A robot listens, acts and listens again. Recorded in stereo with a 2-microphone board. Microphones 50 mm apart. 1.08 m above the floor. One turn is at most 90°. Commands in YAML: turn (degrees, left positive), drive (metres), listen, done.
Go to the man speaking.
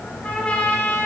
listen: true
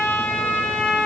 listen: true
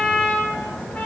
done: "I can't make out a man speaking, only a trumpet."